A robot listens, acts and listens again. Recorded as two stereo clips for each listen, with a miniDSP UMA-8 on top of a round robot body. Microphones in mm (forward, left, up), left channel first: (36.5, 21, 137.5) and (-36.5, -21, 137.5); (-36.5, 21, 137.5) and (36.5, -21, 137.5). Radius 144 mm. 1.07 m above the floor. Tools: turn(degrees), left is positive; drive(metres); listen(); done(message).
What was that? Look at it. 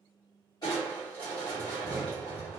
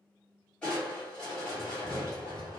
turn(degrees=70)
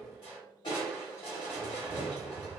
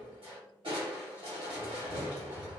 done("Facing the crushing, 1 to 2 m away.")